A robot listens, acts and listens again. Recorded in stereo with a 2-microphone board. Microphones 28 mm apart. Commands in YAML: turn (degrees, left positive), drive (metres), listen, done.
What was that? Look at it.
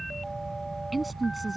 turn: -30
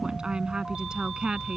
turn: -145
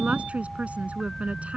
turn: -60
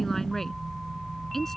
turn: 15
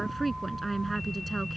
done: "Found it: a woman speaking, straight ahead."